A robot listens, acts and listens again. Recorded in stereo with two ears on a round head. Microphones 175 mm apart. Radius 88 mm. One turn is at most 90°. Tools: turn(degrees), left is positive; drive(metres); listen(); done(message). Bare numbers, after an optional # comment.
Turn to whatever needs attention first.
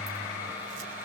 listen()
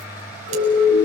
# The siren: about 65° left or 115° left.
turn(65)
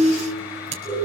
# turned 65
done("Facing the siren.")